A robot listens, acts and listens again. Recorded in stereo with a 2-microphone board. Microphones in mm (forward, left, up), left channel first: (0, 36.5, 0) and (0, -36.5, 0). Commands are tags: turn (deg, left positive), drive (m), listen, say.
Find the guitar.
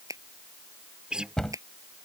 <turn deg="-30"/>
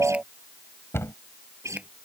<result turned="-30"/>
<turn deg="-140"/>
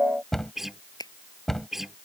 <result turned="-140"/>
<say>Found it: a guitar, straight ahead.</say>